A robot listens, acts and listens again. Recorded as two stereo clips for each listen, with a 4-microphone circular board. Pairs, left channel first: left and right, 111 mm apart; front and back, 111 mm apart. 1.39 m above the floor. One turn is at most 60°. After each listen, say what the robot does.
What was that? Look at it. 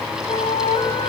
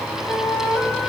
Turn 60° left.
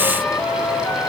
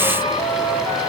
Turn 20° left.
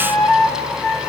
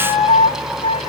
Facing the flute.